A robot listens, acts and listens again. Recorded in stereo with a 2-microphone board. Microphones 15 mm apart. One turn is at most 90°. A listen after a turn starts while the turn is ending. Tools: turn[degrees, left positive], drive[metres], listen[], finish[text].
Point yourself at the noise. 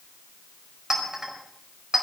Thought: The clink: about 35° right or 145° right.
Action: turn[-35]
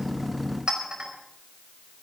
Thought: So it is at 115° right.
Action: turn[-90]
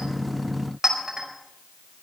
Thought: The clink is now 25° right.
Action: turn[-25]
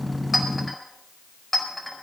Thought: The clink is now 10° left.
Action: turn[10]
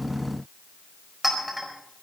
Action: finish[Found it: a clink, straight ahead.]